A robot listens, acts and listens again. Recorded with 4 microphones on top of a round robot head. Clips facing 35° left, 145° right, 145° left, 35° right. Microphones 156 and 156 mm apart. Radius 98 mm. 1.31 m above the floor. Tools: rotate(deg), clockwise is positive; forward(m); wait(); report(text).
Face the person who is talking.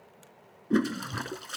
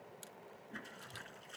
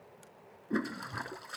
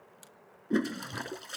wait()
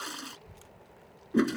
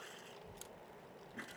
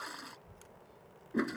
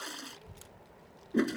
rotate(50)
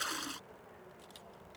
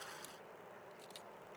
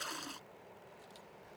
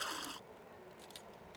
rotate(20)
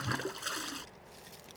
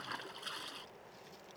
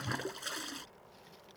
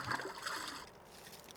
report("Facing the child speaking.")